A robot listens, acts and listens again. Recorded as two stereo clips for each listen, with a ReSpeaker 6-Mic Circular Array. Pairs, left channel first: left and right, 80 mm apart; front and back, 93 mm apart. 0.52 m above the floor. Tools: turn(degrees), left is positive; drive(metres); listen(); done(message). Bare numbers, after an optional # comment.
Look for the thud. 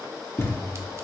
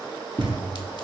# The thud: 150° left.
turn(150)
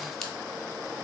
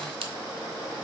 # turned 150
done("I heard a thud from this way, but can't make it out now.")